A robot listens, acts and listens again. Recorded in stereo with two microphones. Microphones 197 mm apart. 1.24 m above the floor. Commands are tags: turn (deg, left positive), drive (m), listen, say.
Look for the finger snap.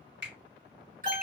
<turn deg="-65"/>
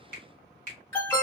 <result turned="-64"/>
<turn deg="-50"/>
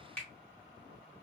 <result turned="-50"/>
<say>Facing the finger snap.</say>